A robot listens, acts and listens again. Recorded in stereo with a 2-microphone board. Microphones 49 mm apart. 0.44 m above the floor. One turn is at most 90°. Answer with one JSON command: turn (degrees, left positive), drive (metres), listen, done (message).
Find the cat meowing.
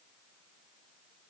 {"listen": true}
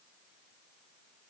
{"listen": true}
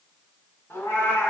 {"turn": 55}
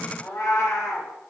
{"turn": 80}
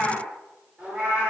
{"turn": -25}
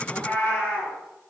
{"turn": 25}
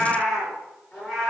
{"done": "Facing the cat meowing."}